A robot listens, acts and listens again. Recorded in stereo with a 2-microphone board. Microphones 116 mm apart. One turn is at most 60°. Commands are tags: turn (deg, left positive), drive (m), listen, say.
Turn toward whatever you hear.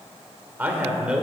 <turn deg="-30"/>
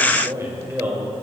<turn deg="-20"/>
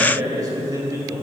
<turn deg="-60"/>
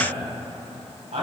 <turn deg="-60"/>
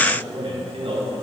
<turn deg="-55"/>
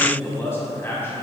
<turn deg="20"/>
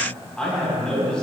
<turn deg="10"/>
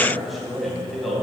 <say>Found it: a man speaking, straight ahead, 2 to 4 m away.</say>